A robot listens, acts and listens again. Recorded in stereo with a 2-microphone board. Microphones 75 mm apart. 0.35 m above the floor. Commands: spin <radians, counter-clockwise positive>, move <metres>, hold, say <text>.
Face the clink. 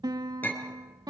spin 0.44
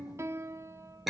say Facing the clink, over 4 m away.